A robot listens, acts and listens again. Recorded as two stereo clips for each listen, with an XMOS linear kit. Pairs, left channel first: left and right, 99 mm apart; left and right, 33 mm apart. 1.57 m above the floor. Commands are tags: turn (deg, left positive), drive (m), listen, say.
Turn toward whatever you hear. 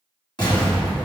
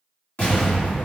<turn deg="50"/>
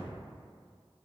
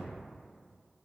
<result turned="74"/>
<listen/>
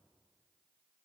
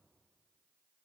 <say>I heard an explosion, but can't make it out now. It was about 25° right or 55° left.</say>